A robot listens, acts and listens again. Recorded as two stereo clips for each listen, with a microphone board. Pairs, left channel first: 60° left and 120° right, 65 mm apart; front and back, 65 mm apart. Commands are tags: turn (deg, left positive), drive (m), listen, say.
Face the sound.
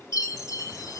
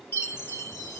<turn deg="40"/>
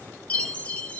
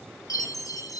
<say>Found it: a chime, straight ahead, 1 to 2 m away.</say>